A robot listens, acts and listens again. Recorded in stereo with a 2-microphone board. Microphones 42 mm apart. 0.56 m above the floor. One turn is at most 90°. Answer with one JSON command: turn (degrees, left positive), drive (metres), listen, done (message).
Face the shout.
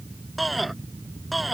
{"turn": -30}
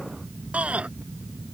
{"turn": -90}
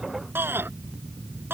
{"turn": -60}
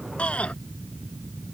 {"turn": 35}
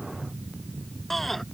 {"turn": 10}
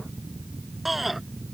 {"done": "Found it: a shout, straight ahead."}